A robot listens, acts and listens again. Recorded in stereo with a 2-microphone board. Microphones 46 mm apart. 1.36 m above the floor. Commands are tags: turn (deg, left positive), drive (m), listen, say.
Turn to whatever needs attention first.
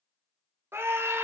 <turn deg="-60"/>
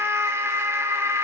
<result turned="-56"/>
<turn deg="-65"/>
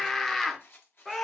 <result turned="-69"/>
<say>Facing the scream.</say>